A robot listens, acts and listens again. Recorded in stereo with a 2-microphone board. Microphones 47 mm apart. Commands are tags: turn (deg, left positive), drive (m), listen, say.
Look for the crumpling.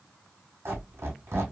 <listen/>
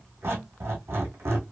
<listen/>
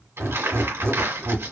<turn deg="-70"/>
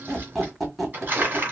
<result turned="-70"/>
<turn deg="-40"/>
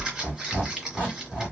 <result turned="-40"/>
<turn deg="-10"/>
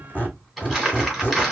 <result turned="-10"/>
<say>Found it: crumpling, straight ahead.</say>